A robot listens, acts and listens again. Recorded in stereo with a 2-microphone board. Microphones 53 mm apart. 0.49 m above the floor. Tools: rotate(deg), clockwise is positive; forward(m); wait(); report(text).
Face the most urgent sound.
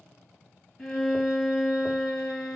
wait()
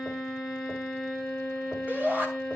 rotate(40)
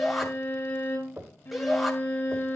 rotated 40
report("Found it: a shout, straight ahead.")